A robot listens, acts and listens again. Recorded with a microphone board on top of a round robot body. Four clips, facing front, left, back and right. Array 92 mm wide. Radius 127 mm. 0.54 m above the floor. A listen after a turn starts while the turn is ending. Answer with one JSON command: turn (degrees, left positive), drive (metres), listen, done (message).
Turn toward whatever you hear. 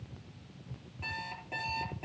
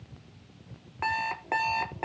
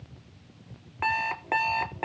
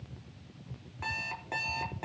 {"turn": 150}
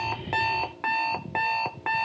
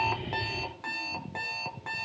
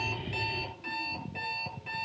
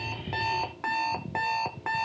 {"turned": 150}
{"turn": -25}
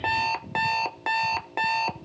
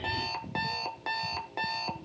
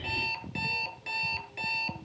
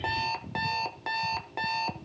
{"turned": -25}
{"done": "Found it: an alarm clock, straight ahead, under 1 m away."}